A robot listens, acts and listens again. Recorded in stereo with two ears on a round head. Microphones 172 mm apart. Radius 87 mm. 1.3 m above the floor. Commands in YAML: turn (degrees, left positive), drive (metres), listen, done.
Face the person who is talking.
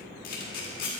listen: true
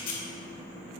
listen: true
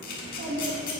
turn: -65
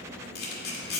listen: true
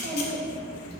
turn: -45
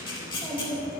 turn: -15
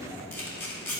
listen: true
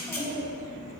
done: "Found it: a child speaking, straight ahead."